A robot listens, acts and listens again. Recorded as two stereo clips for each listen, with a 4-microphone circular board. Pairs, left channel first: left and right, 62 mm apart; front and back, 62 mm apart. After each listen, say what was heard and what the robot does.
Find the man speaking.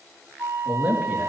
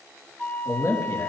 The man speaking: 25° right. Turn 25° right.
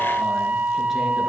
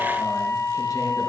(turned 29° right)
Keep listening.
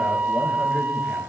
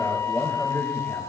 Keep listening.
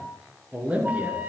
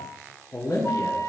The man speaking is now 25° right. Turn 25° right.
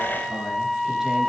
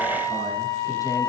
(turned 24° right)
Keep listening.
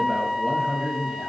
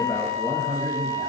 The man speaking is now 15° right. Turn 15° right.
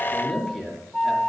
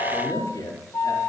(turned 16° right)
Facing the man speaking.